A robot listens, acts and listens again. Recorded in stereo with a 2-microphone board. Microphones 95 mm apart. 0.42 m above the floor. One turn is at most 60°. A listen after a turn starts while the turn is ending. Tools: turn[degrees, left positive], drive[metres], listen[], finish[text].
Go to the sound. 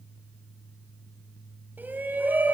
Thought: The shout: about 20° right or 160° right.
Action: turn[-20]
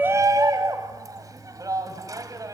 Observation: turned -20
Thought: So it is at 135° right.
Action: turn[-60]
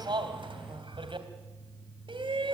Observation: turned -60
Thought: The shout is now 80° right.
Action: turn[-60]
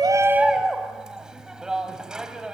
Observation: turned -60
Thought: The shout is now 10° right.
Action: turn[-10]
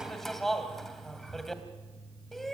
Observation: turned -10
Action: drive[1.0]
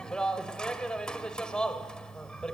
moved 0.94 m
Thought: The shout is now 10° left.
Action: turn[10]
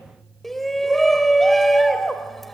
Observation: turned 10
Action: drive[1.0]
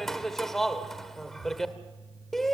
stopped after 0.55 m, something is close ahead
Action: finish[I am next to the shout.]